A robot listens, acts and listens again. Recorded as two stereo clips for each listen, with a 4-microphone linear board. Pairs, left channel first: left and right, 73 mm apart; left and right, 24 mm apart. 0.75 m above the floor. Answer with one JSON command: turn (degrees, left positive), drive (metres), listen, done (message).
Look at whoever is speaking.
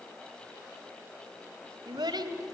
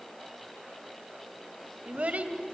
{"turn": -70}
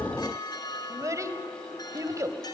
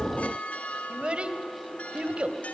{"turn": -45}
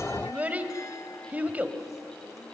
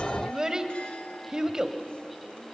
{"turn": -20}
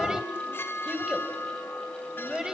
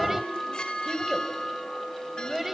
{"turn": -10}
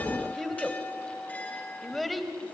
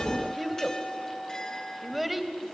{"done": "Facing the child speaking, 2 to 4 m away."}